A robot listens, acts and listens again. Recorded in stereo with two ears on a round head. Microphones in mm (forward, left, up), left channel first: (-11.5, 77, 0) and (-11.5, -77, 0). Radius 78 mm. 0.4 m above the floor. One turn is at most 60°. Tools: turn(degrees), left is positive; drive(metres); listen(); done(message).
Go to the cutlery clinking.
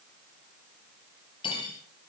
turn(degrees=30)
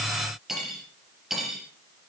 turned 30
drive(metres=1.0)
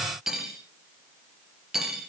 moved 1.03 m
drive(metres=1.0)
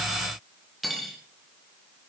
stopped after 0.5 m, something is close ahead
done("Blocked. The cutlery clinking is further on, straight ahead.")